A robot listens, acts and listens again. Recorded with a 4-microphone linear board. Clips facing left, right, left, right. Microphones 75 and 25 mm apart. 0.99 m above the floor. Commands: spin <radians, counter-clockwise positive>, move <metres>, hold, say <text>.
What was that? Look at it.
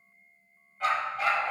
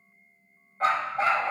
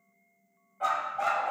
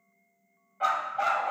spin -0.61
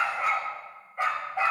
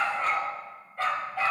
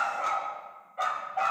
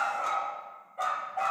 spin 0.44
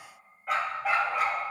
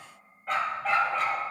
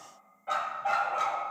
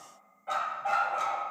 spin 0.26
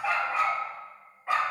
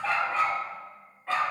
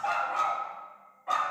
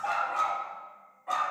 spin 0.26
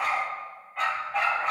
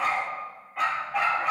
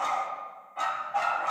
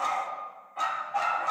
say Facing the dog barking, 2 to 4 m away.